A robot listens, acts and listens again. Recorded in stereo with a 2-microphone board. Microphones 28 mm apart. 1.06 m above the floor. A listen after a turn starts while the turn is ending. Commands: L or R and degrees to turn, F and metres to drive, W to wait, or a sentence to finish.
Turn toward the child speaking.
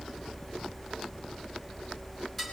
W
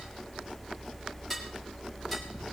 W
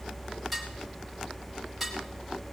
I can't make out a child speaking, only dishes clattering.